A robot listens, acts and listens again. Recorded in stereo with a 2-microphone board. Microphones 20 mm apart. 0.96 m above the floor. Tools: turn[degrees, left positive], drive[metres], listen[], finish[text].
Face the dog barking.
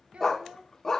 Thought: The dog barking: about 20° left or 160° left.
Action: turn[20]
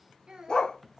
Thought: So it is at 135° left.
Action: turn[135]
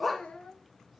Action: finish[Found it: a dog barking, straight ahead.]